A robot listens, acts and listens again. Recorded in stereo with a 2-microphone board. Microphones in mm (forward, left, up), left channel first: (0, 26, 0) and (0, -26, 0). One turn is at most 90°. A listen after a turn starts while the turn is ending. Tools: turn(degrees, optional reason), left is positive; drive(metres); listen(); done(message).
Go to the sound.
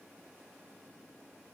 listen()
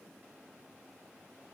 listen()
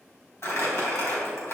turn(degrees=55, reason="The crumpling: about 55° left or 125° left.")
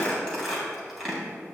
drive(metres=1.0)
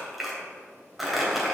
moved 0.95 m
drive(metres=1.0)
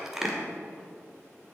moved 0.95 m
turn(degrees=-10, reason="The crumpling is now 10° right.")
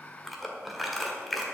drive(metres=1.0)
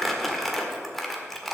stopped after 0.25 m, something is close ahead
done("Arrived at the crumpling, straight ahead.")